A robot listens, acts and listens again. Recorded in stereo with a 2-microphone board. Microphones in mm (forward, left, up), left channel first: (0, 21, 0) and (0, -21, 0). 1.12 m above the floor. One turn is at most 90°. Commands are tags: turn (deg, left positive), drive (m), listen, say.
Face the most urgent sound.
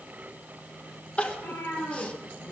<turn deg="30"/>
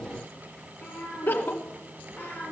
<turn deg="90"/>
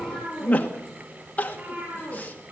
<turn deg="40"/>
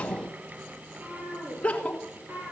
<turn deg="30"/>
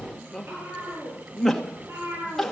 <turn deg="10"/>
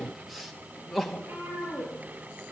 <say>Found it: crying, straight ahead, 2 to 4 m away.</say>